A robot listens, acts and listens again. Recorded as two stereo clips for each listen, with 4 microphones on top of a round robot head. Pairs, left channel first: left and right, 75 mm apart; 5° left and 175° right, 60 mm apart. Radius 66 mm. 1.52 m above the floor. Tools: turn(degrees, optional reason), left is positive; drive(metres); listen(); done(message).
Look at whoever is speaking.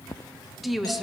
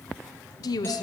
done("Found it: a woman speaking, straight ahead.")